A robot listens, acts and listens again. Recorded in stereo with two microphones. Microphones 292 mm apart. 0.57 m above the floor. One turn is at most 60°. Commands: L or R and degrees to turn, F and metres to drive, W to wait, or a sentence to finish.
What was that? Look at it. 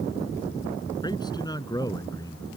L30
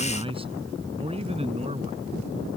R20
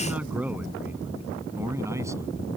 R10
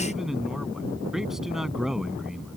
Found it: a man speaking, straight ahead.